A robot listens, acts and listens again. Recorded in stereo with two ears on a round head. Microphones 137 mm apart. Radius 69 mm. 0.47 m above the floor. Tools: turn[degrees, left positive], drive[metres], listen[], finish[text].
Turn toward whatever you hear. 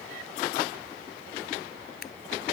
Thought: The scissors: about 65° left or 115° left.
Action: turn[65]
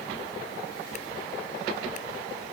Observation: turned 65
Action: listen[]
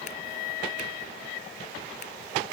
Action: listen[]
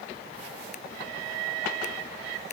Action: finish[I heard scissors, but can't make it out now. It was about straight ahead or 50° left.]